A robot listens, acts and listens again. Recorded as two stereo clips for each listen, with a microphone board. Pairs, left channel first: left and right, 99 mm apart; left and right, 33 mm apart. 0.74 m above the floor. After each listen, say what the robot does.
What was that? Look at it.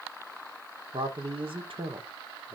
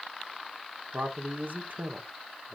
Turn 55° right.
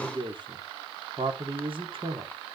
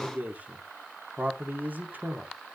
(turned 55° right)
Turn 65° right.
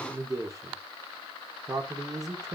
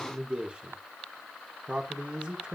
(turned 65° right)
Turn 40° right.
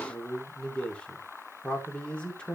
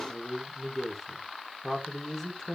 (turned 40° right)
Turn 10° left.
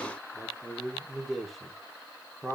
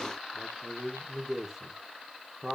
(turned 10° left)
Facing the man speaking, 2 to 4 m away.